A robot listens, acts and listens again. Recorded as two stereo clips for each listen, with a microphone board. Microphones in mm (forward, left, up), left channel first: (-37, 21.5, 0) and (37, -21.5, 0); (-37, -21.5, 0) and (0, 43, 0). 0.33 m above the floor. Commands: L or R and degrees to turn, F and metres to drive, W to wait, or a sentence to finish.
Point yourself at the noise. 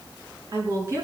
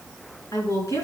R80
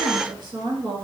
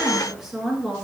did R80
R20
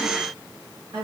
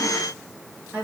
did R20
R10
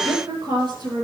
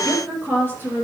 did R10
Facing the woman speaking, over 4 m away.